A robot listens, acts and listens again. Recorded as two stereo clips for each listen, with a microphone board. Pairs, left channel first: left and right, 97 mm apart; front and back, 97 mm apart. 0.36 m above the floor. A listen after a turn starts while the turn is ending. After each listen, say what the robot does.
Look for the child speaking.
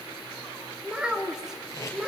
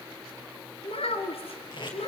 Facing the child speaking.